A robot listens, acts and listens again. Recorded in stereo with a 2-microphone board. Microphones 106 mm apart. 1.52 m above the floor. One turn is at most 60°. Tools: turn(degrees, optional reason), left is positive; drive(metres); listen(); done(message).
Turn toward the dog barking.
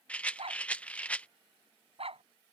turn(degrees=-60, reason="The dog barking: about 65° right or 115° right.")
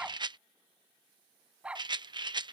turn(degrees=-10, reason="So it is at 10° right.")
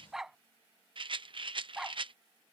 done("Facing the dog barking.")